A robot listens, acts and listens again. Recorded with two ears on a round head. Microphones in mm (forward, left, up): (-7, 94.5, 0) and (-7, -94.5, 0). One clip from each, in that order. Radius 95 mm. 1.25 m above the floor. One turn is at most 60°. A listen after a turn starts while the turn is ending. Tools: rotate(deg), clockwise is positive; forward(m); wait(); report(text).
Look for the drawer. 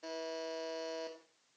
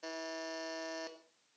wait()
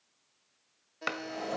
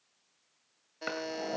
rotate(-40)
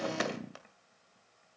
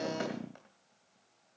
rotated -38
wait()
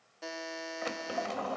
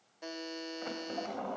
rotate(-60)
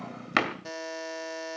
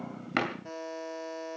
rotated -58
rotate(-35)
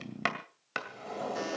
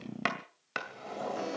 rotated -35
report("Facing the drawer, 2 to 4 m away.")